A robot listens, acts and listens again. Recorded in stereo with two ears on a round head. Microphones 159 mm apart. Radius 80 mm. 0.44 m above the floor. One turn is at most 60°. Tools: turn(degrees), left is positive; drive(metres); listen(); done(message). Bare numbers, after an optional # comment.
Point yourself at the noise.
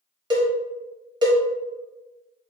# The cowbell: about 25° right or 155° right.
turn(-25)
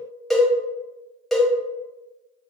done("Facing the cowbell, under 1 m away.")